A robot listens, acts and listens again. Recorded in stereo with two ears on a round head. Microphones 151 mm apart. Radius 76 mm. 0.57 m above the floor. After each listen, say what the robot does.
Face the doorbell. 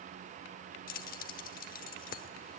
Keep listening.
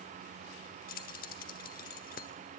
Keep listening.
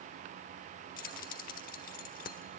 I can't make out a doorbell to turn to.